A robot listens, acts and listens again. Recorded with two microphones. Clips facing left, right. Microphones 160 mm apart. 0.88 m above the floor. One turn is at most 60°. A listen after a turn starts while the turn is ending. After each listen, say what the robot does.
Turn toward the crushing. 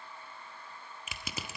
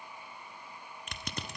Turn 30° left.
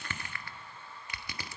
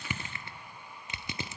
Turn 20° right.
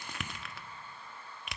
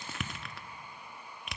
Found it: crushing, straight ahead, under 1 m away.